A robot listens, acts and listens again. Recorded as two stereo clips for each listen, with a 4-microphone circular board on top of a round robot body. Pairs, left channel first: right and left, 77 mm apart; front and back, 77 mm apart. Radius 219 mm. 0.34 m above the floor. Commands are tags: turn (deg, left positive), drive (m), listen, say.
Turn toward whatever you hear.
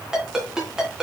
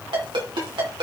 <turn deg="175"/>
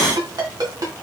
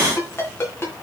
<turn deg="60"/>
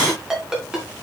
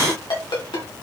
<turn deg="10"/>
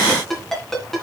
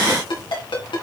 <say>Found it: a ringtone, straight ahead, 2 to 4 m away.</say>